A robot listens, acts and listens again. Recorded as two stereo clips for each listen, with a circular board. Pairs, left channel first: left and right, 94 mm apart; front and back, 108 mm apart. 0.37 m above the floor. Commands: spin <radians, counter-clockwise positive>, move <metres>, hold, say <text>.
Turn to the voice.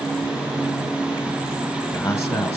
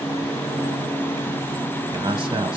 spin 2.53
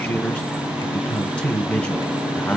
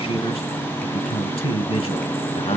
spin 0.26
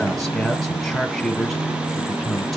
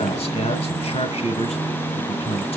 say Found it: a man speaking, straight ahead.